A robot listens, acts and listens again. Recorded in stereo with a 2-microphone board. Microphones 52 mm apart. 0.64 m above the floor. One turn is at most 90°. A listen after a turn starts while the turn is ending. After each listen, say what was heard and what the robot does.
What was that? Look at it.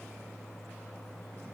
Keep listening.
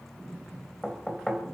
Turn 30° left.
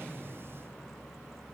Keep listening.
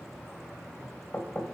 So it is at 140° left. Turn 90° left.
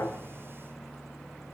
Nothing new. It was at 50° left. Turn 50° left.
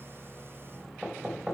The knocking is now 15° right. Turn 15° right.
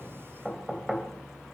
Found it: knocking, straight ahead, 2 to 4 m away.